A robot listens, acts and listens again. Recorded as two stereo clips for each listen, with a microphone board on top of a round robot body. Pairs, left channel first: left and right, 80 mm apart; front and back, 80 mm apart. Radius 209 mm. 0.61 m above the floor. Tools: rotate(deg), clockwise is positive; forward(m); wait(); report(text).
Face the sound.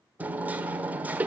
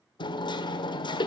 rotate(20)
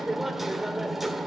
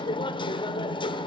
report("Found it: hammering, straight ahead.")